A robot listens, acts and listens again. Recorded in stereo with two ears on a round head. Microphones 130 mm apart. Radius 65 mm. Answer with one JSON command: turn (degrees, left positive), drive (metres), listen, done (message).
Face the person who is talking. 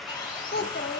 {"turn": 90}
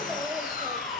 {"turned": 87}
{"listen": true}
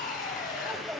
{"turn": -10}
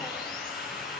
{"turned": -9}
{"listen": true}
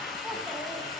{"listen": true}
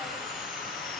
{"done": "Facing where the child speaking came from. I can't hear it now."}